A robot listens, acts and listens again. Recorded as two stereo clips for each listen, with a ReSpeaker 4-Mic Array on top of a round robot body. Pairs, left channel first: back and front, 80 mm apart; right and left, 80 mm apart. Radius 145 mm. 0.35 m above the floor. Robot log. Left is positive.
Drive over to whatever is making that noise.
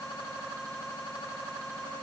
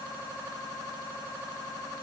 cmd idle
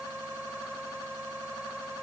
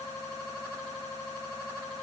cmd idle
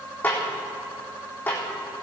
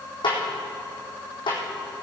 note: The snare drum: 110° right.
cmd yaw -110
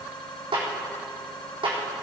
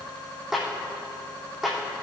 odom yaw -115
cmd fwd 1.0
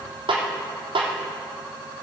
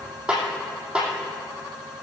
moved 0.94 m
note: The snare drum is now 10° left.
cmd yaw +10
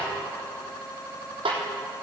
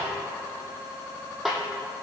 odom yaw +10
cmd fwd 1.0
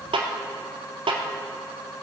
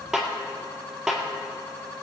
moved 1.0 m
cmd fwd 1.0
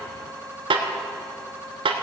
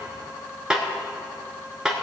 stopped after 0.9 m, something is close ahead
note: The snare drum is now 10° left.
cmd yaw +10
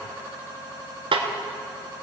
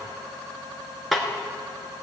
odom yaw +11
end: Arrived at the snare drum, straight ahead.